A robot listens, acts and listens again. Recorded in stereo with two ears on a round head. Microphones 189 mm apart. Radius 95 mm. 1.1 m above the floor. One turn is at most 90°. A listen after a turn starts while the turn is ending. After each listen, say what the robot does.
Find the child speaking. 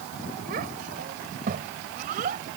Turn 40° right.
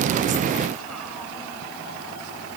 Keep listening.
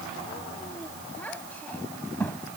Turn 10° left.
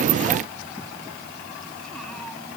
Keep listening.
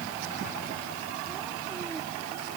Keep listening.
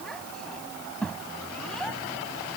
Facing the child speaking.